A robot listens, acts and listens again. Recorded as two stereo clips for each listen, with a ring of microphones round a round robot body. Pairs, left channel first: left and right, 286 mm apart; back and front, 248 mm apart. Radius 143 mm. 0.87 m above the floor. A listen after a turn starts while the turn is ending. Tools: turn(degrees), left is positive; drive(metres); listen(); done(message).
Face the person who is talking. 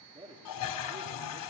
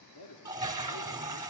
turn(degrees=-160)
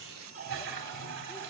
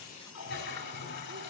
listen()
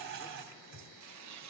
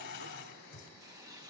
listen()
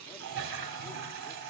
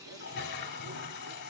done("I heard a man speaking from this way, but can't make it out now.")